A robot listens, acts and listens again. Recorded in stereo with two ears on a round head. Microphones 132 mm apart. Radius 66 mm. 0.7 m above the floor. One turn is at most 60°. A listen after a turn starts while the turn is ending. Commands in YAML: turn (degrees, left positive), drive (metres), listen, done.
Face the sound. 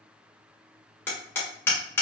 turn: 15
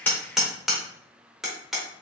done: "Found it: hammering, straight ahead."